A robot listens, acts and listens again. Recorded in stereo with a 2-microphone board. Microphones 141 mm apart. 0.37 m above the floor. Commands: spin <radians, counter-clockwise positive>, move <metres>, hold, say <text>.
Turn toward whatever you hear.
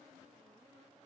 hold
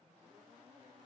hold
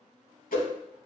spin 1.57
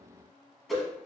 say Facing the whoosh, under 1 m away.